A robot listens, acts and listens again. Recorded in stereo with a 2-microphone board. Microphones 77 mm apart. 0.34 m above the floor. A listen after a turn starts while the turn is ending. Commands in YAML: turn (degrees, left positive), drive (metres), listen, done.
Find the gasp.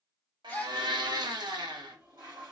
turn: 15
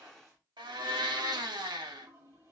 listen: true
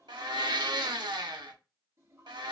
done: "I heard a gasp, but can't make it out now. It was about straight ahead or 150° left."